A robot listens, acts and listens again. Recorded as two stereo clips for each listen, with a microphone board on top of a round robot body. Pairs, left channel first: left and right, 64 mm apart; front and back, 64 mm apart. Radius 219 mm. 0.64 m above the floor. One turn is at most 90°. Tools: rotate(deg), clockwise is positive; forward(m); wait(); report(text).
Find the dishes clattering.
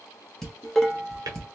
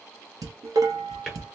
rotate(-90)
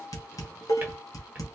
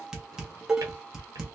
rotate(-90)
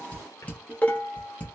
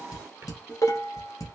rotate(-25)
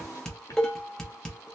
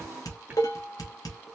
rotate(-10)
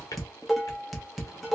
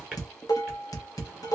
report("Facing the dishes clattering, 1 to 2 m away.")